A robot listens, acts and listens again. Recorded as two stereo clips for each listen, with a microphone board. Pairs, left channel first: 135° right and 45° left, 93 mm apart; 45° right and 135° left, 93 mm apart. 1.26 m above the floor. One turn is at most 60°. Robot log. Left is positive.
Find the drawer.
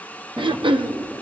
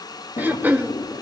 note: The drawer: 25° right.
cmd yaw -25
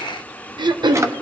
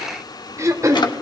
note: The drawer is now 10° right.
cmd yaw -10
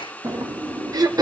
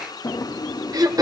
end: Facing the drawer, 1 to 2 m away.